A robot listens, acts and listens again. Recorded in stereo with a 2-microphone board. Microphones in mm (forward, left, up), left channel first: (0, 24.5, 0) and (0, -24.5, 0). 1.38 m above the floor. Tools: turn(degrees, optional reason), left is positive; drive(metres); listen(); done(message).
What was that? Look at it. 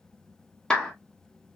turn(degrees=30)
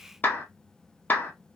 turn(degrees=140, reason="So it is at 140° left.")
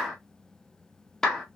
turn(degrees=10, reason="The clap is now 10° left.")
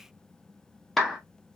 done("Found it: a clap, straight ahead.")